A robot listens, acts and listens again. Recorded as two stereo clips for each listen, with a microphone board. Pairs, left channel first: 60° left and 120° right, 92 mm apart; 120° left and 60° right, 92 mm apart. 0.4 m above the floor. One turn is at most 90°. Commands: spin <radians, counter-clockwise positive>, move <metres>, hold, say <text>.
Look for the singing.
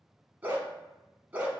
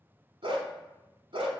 hold
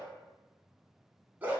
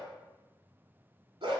hold
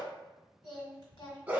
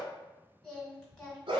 spin 0.70
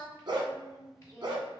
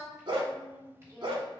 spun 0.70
say Facing the singing.